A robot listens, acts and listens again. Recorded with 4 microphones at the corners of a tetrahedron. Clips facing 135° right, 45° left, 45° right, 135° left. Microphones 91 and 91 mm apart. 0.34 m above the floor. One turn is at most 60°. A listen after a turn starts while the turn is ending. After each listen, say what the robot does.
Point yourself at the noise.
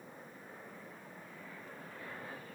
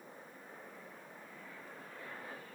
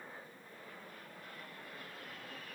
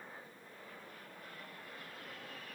Keep listening.
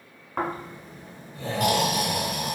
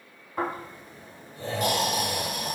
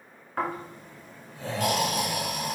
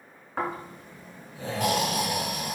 Turn 60° right.
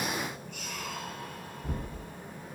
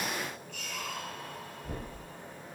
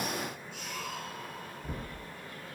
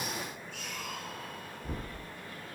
Turn 60° right.
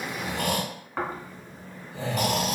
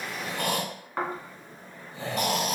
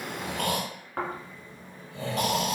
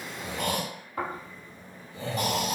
Turn 45° right.
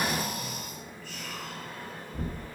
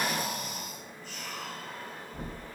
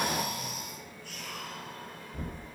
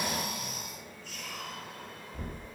Turn 20° right.
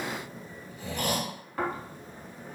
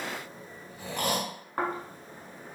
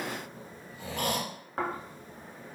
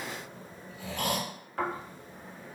Facing the snoring.